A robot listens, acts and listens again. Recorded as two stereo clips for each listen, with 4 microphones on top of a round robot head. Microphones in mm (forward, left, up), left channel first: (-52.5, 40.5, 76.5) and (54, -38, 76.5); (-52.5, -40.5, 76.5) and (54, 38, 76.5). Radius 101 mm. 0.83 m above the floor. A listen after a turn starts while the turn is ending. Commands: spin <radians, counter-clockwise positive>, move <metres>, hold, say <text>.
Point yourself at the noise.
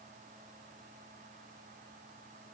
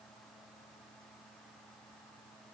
hold
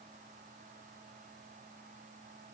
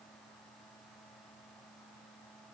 hold
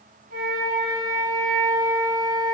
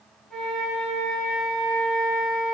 spin -0.96
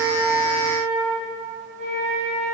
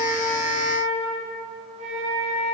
say Found it: a flute, straight ahead, 1 to 2 m away.